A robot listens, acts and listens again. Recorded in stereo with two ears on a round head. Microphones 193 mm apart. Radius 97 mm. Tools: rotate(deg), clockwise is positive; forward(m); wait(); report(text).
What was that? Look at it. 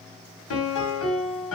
rotate(-65)
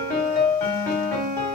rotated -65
rotate(-10)
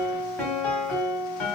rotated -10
report("Facing the piano.")